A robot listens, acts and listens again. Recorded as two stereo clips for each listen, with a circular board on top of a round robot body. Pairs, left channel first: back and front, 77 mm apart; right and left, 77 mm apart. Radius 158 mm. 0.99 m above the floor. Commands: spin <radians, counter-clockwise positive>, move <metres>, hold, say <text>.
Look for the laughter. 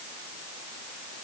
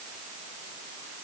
hold
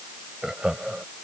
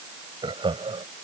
spin 1.40
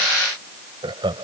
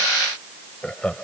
spin -0.17
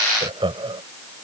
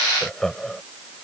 say Found it: laughter, straight ahead.